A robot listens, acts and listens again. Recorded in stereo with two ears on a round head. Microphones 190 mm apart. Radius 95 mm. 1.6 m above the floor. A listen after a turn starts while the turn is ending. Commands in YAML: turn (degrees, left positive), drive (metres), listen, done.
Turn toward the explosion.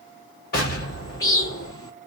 turn: 45
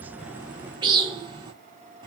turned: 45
listen: true
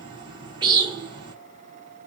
done: "I heard an explosion, but can't make it out now. It was about straight ahead or 90° left."